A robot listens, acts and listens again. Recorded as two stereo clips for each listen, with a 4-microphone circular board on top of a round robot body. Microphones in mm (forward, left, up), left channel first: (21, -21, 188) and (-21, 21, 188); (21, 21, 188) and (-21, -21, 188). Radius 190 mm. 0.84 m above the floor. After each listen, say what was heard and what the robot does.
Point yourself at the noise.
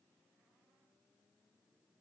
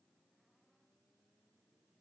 Keep listening.
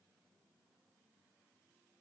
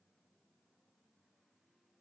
Keep listening.
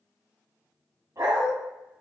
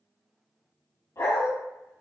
The dog barking: 85° left. Turn 85° left.
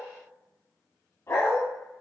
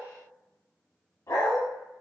Found it: a dog barking, straight ahead, under 1 m away.